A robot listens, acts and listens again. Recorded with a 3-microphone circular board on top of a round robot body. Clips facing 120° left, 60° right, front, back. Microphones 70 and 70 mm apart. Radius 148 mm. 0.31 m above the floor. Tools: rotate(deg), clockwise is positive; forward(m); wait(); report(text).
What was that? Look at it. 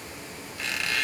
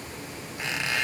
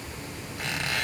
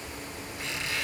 report("Found it: a squeak, straight ahead.")